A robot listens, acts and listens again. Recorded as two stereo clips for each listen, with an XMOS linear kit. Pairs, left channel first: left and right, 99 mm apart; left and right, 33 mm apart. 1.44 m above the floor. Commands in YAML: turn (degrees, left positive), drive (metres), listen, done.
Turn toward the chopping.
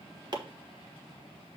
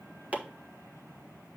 turn: -45
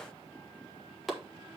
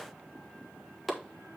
done: "Found it: chopping, straight ahead, 1 to 2 m away."